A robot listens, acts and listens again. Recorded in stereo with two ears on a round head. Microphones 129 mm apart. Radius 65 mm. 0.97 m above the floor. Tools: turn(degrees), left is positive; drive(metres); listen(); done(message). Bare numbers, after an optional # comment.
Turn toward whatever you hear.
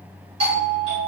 # The doorbell: about 40° right or 140° right.
turn(-40)
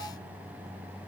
listen()
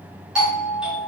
done("Facing the doorbell, 2 to 4 m away.")